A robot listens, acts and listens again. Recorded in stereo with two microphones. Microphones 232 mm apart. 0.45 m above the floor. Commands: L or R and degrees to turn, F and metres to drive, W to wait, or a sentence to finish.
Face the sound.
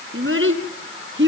R55
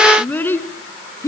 L15
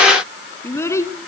L15
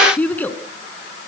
L10
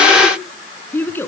L10
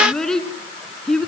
Found it: a child speaking, straight ahead, 2 to 4 m away.